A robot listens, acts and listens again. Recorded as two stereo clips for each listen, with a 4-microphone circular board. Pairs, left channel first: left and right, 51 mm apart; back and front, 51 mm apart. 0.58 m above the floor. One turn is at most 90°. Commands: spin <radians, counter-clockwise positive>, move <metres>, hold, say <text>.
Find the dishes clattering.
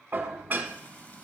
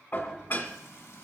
spin -1.57
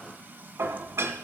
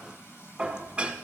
spin -1.22
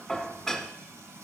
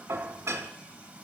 say Facing the dishes clattering, 1 to 2 m away.